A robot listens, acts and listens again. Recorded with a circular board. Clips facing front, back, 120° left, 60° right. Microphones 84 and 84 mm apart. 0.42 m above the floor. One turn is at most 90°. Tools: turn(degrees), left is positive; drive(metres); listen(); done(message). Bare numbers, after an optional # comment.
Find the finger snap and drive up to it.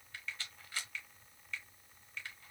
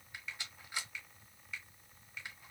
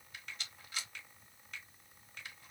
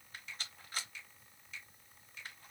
# The finger snap: 100° left.
turn(90)
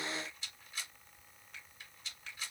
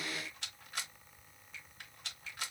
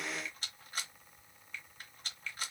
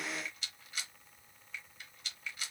# The finger snap is now 15° left.
turn(15)
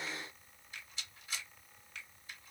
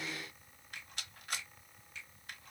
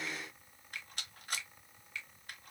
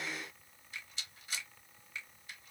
drive(1.0)
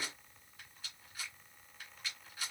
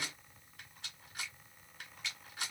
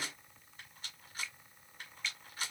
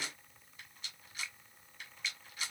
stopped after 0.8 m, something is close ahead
done("I am next to the finger snap.")